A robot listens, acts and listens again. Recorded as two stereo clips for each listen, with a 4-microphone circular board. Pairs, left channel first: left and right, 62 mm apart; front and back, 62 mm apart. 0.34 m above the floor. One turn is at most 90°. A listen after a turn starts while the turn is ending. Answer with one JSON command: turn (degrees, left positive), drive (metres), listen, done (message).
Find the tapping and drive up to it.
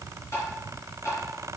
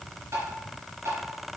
{"turn": 90}
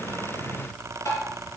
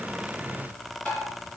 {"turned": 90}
{"turn": 60}
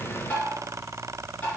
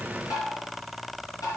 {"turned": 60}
{"turn": 20}
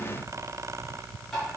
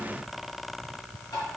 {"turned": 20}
{"drive": 1.0}
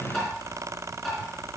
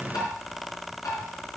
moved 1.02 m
{"drive": 1.0}
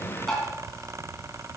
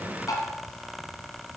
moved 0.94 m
{"drive": 1.0}
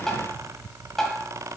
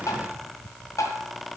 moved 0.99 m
{"drive": 1.0}
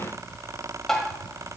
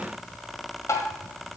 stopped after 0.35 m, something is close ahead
{"done": "I am next to the tapping."}